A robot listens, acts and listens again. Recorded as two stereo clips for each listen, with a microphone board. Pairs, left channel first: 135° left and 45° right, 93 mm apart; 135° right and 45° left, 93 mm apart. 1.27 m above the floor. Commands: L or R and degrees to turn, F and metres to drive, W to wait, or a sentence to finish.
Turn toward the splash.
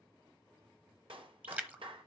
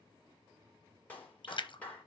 R115
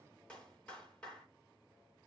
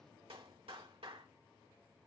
I heard a splash from this way, but can't make it out now.